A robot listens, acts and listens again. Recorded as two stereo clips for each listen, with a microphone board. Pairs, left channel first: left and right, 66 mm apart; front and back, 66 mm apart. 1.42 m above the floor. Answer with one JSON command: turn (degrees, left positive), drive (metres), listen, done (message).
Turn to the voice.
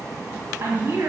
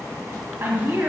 {"turn": -130}
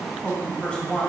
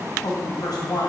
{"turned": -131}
{"turn": 15}
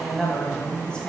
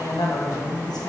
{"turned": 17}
{"turn": 15}
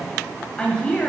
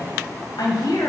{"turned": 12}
{"turn": 20}
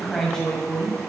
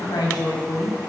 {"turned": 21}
{"turn": 20}
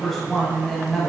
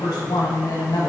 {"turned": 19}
{"done": "Facing the woman speaking, 1 to 2 m away."}